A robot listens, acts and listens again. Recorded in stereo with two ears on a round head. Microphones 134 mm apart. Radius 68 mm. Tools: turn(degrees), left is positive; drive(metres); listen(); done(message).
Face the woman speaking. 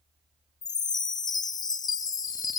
listen()
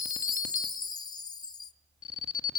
listen()
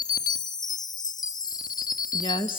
turn(degrees=35)
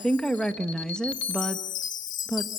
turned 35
done("Facing the woman speaking, 1 to 2 m away.")